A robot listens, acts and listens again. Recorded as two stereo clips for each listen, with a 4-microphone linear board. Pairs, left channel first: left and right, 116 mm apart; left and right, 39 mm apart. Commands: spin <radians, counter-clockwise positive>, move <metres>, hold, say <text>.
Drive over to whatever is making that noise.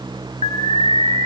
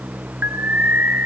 spin -1.05
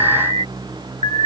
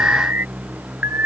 spin -0.96
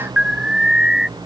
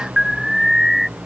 move 1.0
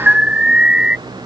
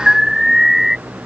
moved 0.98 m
spin -0.17
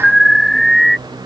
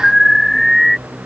move 1.0
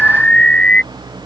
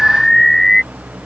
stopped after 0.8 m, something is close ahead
spin 0.17
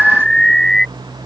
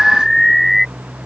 say Arrived at the alarm, straight ahead.